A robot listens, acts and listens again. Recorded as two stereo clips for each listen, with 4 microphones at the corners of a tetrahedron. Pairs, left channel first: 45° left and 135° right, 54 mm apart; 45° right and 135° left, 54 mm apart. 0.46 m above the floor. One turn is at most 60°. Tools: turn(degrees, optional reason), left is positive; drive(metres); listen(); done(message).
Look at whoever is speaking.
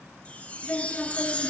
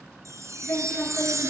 done("Facing the woman speaking, over 4 m away.")